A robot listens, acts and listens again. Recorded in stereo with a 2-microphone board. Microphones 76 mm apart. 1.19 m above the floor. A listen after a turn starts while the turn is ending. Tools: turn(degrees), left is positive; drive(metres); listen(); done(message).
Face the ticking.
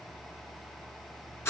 listen()
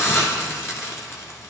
listen()
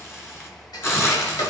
turn(degrees=65)
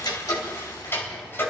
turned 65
turn(degrees=35)
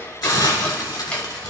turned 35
turn(degrees=15)
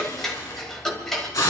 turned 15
done("Facing the ticking.")